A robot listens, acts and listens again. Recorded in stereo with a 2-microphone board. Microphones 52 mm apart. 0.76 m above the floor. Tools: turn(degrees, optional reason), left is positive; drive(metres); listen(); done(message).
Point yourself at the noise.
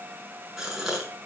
turn(degrees=-30)
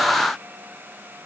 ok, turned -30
listen()
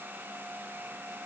done("I heard a gasp, but can't make it out now. It was about 20° left or 140° right.")